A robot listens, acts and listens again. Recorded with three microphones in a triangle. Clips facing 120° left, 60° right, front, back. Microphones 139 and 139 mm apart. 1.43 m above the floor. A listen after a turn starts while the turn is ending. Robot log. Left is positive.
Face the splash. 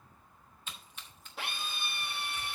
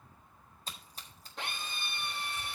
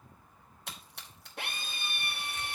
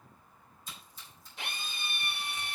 note: The splash: 10° right.
cmd yaw -10
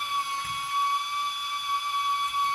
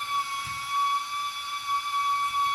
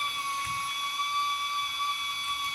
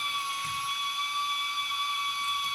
end: I heard a splash from this way, but can't make it out now.